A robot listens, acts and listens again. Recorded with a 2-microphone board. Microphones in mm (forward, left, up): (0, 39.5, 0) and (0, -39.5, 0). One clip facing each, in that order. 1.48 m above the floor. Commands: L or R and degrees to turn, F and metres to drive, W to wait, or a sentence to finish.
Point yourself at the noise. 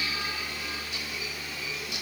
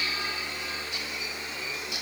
W
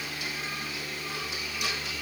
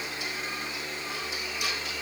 W
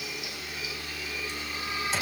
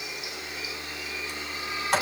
R65
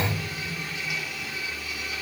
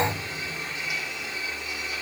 R40
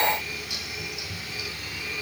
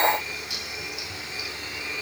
R15
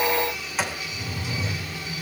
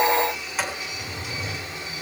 Facing the sliding door, 2 to 4 m away.